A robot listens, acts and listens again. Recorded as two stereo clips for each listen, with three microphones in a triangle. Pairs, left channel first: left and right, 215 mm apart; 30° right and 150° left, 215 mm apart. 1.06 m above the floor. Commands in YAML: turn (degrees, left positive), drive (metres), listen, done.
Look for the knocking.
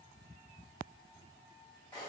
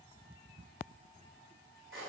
listen: true
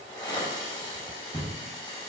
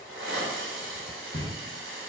turn: -155
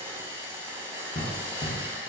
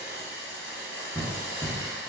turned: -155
turn: 40
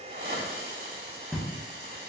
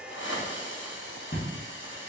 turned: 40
done: "Found it: knocking, straight ahead."